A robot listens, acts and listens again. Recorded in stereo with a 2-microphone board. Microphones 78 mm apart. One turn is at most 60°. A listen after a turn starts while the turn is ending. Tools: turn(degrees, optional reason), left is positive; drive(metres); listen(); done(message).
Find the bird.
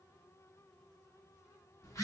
listen()
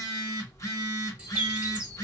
turn(degrees=-15, reason="The bird: about 15° right or 165° right.")
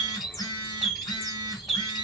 done("Facing the bird.")